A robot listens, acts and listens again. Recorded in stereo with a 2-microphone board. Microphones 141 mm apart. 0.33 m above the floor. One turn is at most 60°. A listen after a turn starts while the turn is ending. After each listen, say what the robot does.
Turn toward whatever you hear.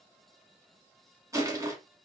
Turn 20° right.
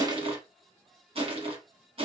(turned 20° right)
Turn 60° right.
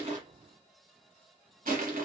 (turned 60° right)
Turn 60° right.
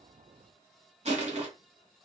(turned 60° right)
Turn 55° right.
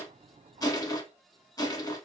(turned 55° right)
Turn 25° left.
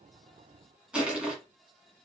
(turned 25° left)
Turn 10° right.
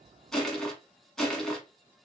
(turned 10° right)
Facing the crushing, under 1 m away.